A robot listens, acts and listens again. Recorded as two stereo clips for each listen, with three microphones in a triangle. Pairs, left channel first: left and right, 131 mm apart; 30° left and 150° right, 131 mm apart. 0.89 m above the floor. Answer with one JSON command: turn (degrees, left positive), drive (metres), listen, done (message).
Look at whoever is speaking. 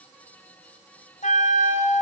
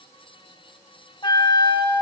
{"listen": true}
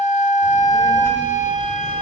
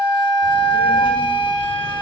{"turn": -20}
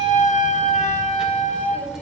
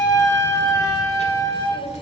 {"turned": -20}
{"done": "Found it: a child speaking, straight ahead."}